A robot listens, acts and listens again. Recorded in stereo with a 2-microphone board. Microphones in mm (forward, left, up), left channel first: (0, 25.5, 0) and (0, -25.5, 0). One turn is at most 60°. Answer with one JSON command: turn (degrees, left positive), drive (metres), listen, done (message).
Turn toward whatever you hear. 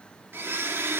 {"turn": -50}
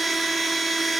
{"done": "Found it: a blender, straight ahead, 2 to 4 m away."}